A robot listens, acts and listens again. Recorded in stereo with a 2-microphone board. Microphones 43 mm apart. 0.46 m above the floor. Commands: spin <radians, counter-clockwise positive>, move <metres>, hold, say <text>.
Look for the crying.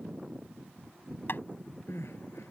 spin 1.57
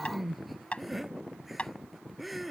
say Found it: crying, straight ahead.